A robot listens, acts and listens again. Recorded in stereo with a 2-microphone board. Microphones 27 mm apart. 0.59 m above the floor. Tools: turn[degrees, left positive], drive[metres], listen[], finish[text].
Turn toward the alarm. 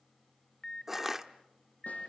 Thought: The alarm: about 25° left or 155° left.
Action: turn[25]
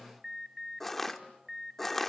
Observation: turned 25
Action: finish[Found it: an alarm, straight ahead, 1 to 2 m away.]